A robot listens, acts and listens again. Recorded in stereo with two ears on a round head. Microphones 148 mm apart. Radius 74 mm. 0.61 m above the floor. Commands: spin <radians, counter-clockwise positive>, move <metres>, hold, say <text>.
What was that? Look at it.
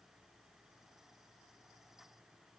hold
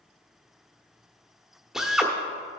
spin -0.52
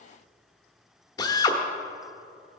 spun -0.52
spin 0.52
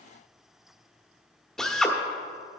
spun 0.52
say Found it: a drill, straight ahead, 1 to 2 m away.